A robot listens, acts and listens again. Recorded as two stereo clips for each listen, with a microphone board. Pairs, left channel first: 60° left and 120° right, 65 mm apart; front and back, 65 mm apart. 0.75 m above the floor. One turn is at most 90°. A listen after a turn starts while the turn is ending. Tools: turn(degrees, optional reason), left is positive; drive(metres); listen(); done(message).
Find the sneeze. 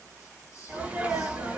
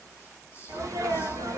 turn(degrees=90, reason="The sneeze: 175° left.")
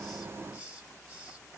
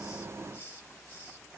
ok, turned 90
turn(degrees=85, reason="Nothing new. It was at 85° left.")
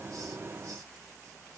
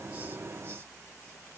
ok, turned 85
done("I heard a sneeze from this way, but can't make it out now.")